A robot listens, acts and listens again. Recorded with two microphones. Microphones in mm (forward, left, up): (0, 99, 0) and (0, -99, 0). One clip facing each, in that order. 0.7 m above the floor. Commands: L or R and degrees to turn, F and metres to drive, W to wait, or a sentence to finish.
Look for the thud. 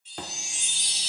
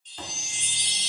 L65
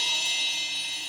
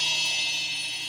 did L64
W
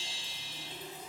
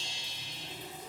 I heard a thud, but can't make it out now. It was about straight ahead or 50° left.